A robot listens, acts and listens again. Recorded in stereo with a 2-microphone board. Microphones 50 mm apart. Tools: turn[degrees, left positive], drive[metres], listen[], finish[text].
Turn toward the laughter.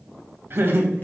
Thought: The laughter: about 50° right or 130° right.
Action: turn[-50]
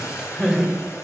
Action: finish[Facing the laughter, 2 to 4 m away.]